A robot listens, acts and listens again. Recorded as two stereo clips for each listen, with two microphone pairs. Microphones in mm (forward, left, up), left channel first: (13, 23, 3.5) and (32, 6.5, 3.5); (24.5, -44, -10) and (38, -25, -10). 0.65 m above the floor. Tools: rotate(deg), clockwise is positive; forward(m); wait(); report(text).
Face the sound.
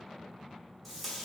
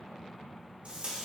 rotate(-55)
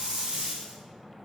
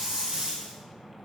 report("Facing the tape being pulled.")